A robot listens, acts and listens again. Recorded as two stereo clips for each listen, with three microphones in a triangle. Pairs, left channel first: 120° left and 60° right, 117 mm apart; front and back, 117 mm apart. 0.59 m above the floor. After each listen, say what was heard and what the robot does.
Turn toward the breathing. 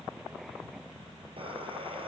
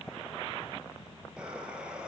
The breathing: 100° right. Turn 100° right.
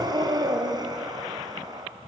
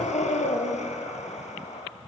Found it: breathing, straight ahead, 2 to 4 m away.